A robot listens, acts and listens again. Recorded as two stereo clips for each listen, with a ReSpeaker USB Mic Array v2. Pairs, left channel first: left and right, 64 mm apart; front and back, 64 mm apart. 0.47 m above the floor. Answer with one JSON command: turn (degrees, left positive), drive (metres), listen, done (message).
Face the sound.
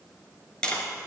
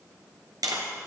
{"turn": 165}
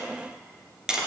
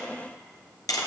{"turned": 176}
{"turn": -10}
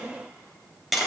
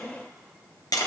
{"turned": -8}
{"done": "Found it: tapping, straight ahead."}